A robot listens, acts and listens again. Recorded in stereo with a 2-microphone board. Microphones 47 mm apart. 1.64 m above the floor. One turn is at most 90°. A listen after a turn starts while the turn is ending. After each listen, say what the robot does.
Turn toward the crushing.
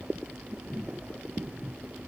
Keep listening.
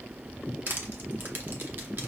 Turn 45° right.
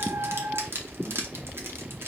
Turn 75° right.
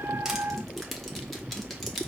Found it: crushing, straight ahead.